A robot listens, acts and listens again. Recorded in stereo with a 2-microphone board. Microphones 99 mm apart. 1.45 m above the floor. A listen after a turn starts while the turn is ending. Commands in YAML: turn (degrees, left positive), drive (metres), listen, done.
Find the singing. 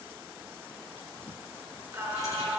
turn: -15
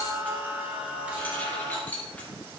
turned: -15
turn: -30
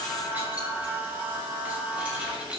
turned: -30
turn: -30
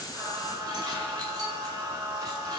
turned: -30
turn: -140
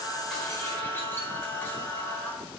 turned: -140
turn: 20
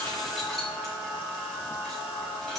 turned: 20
done: "Facing the singing, 2 to 4 m away."